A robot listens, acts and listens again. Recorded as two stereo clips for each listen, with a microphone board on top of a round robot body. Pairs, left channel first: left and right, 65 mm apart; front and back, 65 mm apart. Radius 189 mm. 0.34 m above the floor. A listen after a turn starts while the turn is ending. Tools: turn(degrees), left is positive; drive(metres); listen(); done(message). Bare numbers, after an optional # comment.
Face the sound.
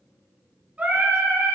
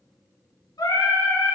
# The singing: 15° right.
turn(-15)
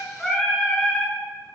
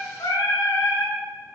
# The singing is now 10° left.
turn(10)
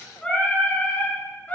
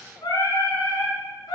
# The singing is now 25° left.
turn(25)
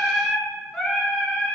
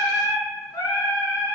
# The singing is now 10° left.
turn(10)
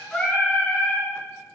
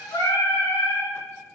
# The singing is now 15° left.
turn(15)
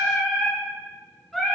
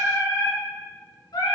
done("Facing the singing.")